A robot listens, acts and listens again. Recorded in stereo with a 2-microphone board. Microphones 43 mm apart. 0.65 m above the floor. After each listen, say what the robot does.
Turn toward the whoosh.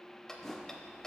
Turn 30° left.
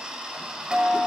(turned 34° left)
Keep listening.
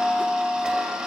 Keep listening.
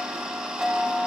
I heard a whoosh, but can't make it out now. It was about 25° right or 135° left.